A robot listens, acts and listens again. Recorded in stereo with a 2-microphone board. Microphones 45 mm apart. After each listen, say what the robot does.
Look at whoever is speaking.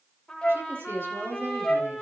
Turn 60° right.
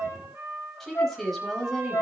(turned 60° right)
Facing the woman speaking, over 4 m away.